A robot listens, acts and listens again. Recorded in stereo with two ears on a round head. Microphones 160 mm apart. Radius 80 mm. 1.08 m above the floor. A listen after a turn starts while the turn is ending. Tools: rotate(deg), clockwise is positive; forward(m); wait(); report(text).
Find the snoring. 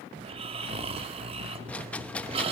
rotate(35)
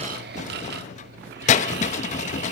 rotate(110)
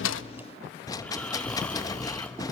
report("Facing the snoring, 1 to 2 m away.")